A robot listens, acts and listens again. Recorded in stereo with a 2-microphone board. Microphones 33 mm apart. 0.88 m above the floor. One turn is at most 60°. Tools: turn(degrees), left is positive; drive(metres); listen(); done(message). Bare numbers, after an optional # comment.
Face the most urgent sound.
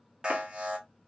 # The alarm: about 30° right or 150° right.
turn(-30)
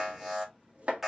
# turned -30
done("Found it: an alarm, straight ahead, 1 to 2 m away.")